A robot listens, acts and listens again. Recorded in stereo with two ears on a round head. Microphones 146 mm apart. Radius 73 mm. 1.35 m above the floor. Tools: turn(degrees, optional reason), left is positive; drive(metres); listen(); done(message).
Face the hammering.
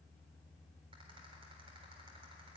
listen()
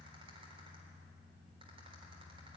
listen()
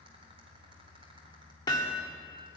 turn(degrees=25, reason="The hammering: about 25° left or 155° left.")
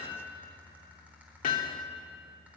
turn(degrees=125, reason="So it is at 125° left.")
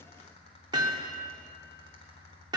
turn(degrees=-25, reason="The hammering is now 25° right.")
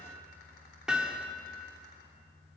done("Found it: hammering, straight ahead.")